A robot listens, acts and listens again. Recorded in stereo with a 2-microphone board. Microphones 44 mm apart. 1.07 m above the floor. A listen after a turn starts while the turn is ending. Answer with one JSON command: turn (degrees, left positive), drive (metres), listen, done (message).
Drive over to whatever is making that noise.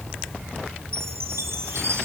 {"turn": -90}
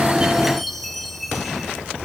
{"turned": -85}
{"drive": 1.0}
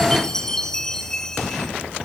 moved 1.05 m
{"turn": 15}
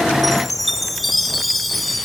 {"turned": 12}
{"drive": 1.0}
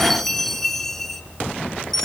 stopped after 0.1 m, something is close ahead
{"turn": 10}
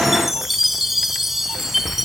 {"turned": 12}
{"done": "Arrived at the chime, straight ahead."}